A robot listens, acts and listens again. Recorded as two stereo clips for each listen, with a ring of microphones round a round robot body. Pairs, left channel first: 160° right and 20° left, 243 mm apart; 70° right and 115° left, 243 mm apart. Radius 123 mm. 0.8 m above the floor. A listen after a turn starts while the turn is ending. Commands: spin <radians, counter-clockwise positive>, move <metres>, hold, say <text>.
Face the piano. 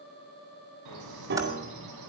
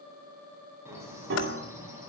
spin 1.22
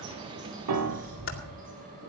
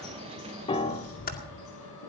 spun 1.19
say Facing the piano, 1 to 2 m away.